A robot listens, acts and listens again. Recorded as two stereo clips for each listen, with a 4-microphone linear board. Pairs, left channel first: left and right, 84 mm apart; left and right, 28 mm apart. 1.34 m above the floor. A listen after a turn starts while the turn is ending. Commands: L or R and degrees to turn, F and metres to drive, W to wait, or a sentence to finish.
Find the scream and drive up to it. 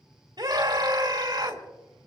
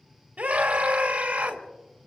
R55
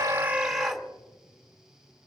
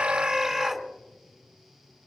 F1.0
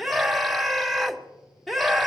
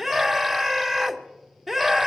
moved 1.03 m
F1.0
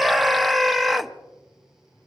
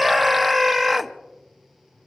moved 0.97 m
F1.0
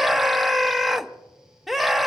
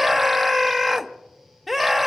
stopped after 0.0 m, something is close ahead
Arrived at the scream, straight ahead.